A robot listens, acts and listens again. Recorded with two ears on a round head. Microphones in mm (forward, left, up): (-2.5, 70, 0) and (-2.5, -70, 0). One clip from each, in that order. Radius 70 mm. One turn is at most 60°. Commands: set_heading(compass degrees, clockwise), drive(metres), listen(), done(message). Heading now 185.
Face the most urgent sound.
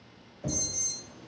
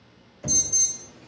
set_heading(240)
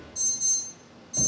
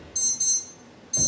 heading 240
set_heading(300)
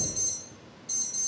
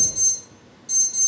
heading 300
set_heading(325)
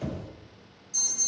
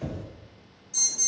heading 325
set_heading(340)
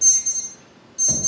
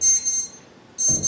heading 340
done("Found it: an alarm, straight ahead.")